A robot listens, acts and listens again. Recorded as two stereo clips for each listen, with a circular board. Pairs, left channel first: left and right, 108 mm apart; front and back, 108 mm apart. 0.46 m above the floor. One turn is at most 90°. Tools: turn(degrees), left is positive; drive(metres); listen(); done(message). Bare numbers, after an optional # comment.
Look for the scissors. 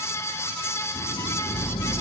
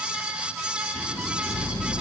# The scissors: 10° left.
turn(10)
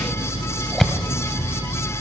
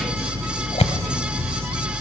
done("Found it: scissors, straight ahead, 1 to 2 m away.")